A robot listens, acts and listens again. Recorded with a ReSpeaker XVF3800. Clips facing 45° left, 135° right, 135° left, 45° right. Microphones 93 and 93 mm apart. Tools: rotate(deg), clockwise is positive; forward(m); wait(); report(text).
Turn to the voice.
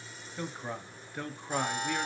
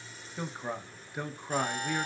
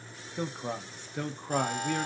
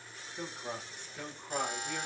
rotate(-145)
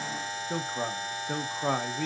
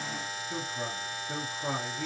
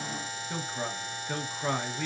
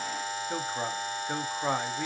rotate(-25)
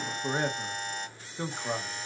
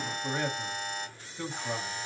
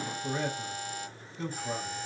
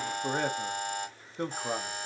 rotate(15)
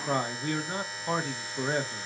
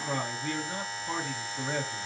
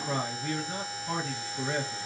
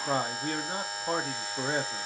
report("Found it: a man speaking, straight ahead.")